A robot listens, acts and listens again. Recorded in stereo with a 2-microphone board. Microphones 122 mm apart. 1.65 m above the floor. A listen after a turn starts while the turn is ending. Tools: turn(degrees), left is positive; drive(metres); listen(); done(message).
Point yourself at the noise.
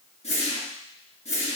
turn(degrees=65)
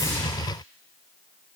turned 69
listen()
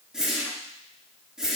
done("Facing the whoosh, 1 to 2 m away.")